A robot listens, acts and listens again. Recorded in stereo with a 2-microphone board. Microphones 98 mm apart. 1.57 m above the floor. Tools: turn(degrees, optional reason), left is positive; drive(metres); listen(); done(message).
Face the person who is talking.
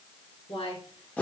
turn(degrees=90)
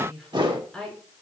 done("Facing the woman speaking.")